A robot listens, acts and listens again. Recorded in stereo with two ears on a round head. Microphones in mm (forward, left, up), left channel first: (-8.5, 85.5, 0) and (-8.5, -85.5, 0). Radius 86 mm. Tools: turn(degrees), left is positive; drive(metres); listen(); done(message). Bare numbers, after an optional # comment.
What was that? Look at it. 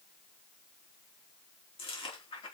# The chewing: about 30° left or 150° left.
turn(30)
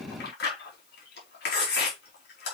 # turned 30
# So it is at 120° left.
turn(120)
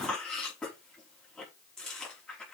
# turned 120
done("Found it: chewing, straight ahead, over 4 m away.")